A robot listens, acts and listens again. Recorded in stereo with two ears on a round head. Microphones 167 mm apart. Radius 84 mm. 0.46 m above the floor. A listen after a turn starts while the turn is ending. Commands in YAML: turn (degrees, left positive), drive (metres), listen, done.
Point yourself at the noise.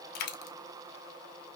turn: 60
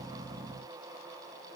listen: true
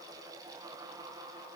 done: "I heard a dropped coin, but can't make it out now. It was about straight ahead or 60° left."